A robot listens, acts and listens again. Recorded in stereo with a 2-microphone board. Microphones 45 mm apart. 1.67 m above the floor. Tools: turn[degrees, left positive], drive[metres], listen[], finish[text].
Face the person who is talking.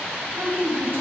Thought: The woman speaking: about 55° right or 125° right.
Action: turn[-55]
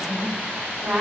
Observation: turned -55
Thought: So it is at 65° right.
Action: turn[-65]
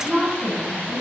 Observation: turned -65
Thought: The woman speaking is now 10° right.
Action: turn[-10]
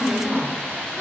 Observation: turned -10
Action: finish[Facing the woman speaking, 1 to 2 m away.]